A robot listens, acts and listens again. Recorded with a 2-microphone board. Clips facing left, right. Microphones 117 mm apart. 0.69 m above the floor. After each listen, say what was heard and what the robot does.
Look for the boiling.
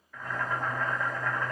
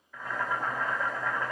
Turn 30° right.
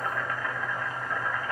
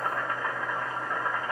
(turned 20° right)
So it is at 155° right. Turn 155° right.
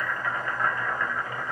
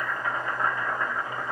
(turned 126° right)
The boiling is now 30° right. Turn 30° right.
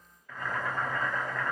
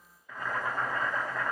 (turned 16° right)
The boiling is now 10° right. Turn 10° right.
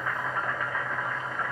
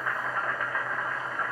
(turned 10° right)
Facing the boiling, 1 to 2 m away.